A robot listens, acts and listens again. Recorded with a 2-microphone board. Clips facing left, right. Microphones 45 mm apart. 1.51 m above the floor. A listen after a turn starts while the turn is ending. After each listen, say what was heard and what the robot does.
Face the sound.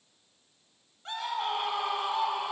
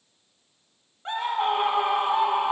The scream: about 20° right or 160° right. Turn 20° right.
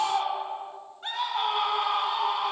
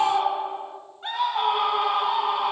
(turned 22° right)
Facing the scream, 1 to 2 m away.